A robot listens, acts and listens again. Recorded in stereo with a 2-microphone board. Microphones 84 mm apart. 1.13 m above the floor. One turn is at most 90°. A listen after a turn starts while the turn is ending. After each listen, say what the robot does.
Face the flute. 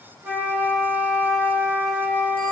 Turn 20° right.
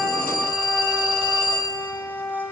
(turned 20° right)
Facing the flute, 2 to 4 m away.